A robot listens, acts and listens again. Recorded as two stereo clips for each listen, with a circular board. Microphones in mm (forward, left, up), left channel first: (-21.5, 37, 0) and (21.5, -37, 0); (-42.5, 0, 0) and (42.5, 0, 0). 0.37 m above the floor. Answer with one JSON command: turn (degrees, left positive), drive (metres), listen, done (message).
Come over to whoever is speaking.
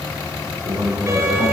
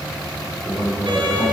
{"turn": -60}
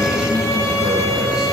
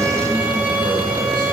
{"turn": 20}
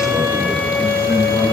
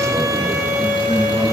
{"drive": 1.0}
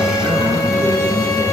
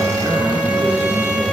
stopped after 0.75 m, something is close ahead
{"done": "Something is in my way. I am facing the man speaking but have not reached it."}